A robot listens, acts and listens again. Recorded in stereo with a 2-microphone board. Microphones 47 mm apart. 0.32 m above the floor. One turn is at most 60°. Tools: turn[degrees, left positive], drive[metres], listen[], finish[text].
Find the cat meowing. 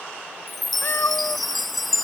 Thought: The cat meowing: about 60° left or 120° left.
Action: turn[60]
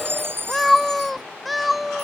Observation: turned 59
Action: finish[Facing the cat meowing.]